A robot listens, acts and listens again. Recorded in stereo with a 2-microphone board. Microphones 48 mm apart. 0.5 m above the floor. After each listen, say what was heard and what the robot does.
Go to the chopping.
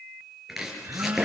Turn 30° right.
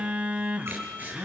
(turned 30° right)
So it is at 145° right. Turn 145° right.
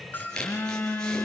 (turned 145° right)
The chopping is now 15° left. Turn 15° left.
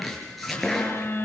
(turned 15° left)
Drive 1.0 m forward.
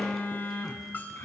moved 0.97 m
Keep listening.
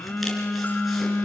Keep listening.
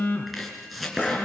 Drive 1.0 m forward.
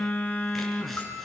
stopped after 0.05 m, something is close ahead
Keep listening.
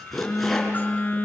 Blocked. The chopping is further on, straight ahead.